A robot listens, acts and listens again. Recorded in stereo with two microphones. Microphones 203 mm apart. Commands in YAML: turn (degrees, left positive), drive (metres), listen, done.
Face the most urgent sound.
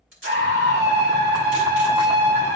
turn: -60
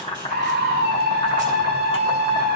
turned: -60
turn: -55
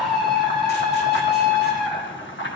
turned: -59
done: "Facing the scream."